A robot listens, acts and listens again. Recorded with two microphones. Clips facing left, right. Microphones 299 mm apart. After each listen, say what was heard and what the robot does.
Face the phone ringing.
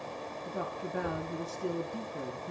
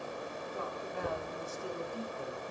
Keep listening.
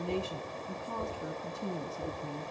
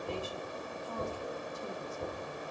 Keep listening.
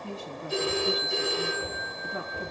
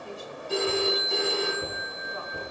The phone ringing: about 70° right or 110° right. Turn 70° right.
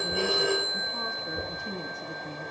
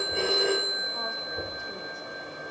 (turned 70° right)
Facing the phone ringing.